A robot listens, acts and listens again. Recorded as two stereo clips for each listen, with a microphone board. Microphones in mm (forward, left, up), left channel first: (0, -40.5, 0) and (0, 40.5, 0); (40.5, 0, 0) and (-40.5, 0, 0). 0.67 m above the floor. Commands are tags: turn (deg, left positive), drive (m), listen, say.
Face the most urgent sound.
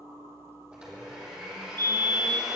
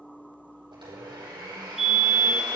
<turn deg="95"/>
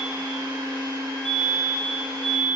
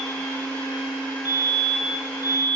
<say>Found it: a fire alarm, straight ahead, over 4 m away.</say>